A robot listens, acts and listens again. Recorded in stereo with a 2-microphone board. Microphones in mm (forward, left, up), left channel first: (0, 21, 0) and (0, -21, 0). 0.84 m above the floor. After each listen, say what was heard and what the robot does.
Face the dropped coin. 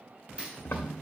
The dropped coin: about 30° right or 150° right. Turn 30° right.
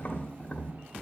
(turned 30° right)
Keep listening.
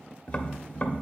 I heard a dropped coin, but can't make it out now. It was about straight ahead or 120° right.